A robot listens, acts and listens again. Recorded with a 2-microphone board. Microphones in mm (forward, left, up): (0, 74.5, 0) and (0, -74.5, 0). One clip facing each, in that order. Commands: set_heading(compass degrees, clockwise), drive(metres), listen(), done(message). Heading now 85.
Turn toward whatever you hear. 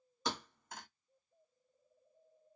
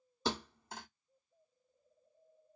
set_heading(115)
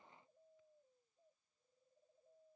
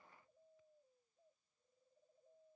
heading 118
listen()
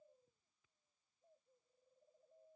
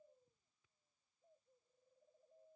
done("I heard a thud, but can't make it out now. It was about straight ahead or 115° right.")